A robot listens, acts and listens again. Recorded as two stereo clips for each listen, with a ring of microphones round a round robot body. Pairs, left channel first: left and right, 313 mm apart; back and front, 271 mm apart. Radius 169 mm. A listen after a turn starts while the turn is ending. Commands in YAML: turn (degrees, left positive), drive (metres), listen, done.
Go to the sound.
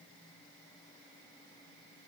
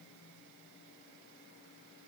listen: true
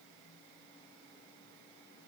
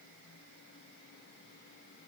listen: true
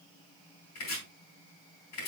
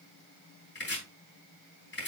turn: 130
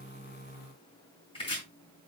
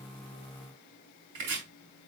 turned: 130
turn: 15
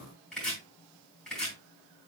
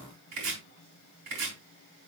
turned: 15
drive: 1.0
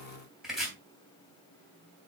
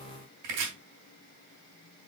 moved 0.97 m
drive: 1.0
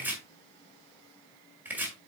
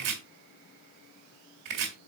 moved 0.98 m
drive: 1.0
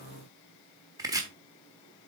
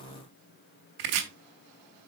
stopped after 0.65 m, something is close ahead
turn: -10
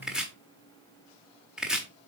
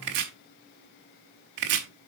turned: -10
done: "I am next to the chopping."